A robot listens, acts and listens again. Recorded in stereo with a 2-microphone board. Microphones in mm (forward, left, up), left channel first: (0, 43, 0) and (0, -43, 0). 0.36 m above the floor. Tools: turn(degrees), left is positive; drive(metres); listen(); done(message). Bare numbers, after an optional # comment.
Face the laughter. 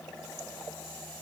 listen()
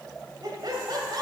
# The laughter: about 55° right or 125° right.
turn(-55)
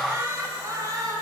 # So it is at 45° right.
turn(-45)
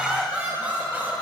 # The laughter is now 25° right.
turn(-25)
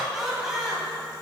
done("Facing the laughter, 1 to 2 m away.")